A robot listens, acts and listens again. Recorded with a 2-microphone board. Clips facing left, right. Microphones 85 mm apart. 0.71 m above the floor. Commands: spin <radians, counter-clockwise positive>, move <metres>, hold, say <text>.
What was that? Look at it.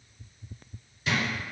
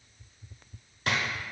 spin -1.05
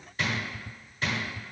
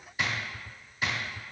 spin -0.17
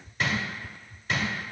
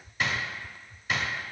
say Facing the drawer.